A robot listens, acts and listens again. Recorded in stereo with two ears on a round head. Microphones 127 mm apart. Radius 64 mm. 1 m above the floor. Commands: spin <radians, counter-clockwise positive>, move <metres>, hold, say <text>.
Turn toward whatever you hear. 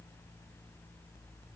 hold
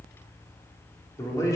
spin 0.44
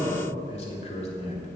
spin 2.18
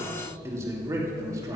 spin -0.44
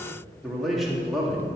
say Found it: a man speaking, straight ahead, 2 to 4 m away.